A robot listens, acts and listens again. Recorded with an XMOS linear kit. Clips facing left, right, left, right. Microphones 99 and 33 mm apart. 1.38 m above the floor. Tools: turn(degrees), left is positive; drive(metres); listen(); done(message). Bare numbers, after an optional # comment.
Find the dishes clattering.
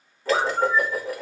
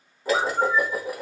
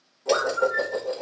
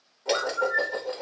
turn(-30)
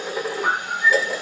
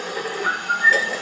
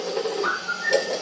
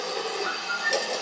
# So it is at 15° left.
turn(15)
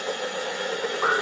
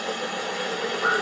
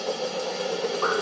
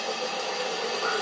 done("Facing the dishes clattering, 1 to 2 m away.")